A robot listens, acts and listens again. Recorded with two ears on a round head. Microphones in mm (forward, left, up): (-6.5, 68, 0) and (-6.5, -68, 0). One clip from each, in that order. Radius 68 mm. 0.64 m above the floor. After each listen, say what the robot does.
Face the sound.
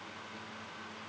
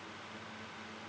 Keep listening.
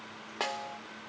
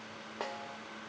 Turn 65° left.
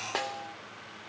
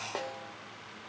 Turn 50° left.
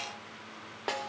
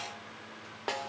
Facing the snare drum.